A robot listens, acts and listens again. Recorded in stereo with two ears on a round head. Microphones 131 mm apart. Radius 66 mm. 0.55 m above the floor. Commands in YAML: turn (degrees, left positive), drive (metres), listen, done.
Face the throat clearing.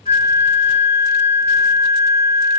listen: true
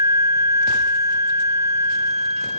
listen: true
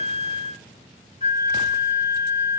done: "I can't make out throat clearing, only a flute."